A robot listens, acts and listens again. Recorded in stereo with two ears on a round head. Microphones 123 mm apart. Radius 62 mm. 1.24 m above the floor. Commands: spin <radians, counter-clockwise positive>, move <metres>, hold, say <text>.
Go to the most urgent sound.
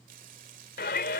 spin 1.57
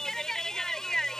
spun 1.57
move 1.0
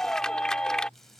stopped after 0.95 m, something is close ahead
say Something is in my way. I am facing the shout but have not reached it.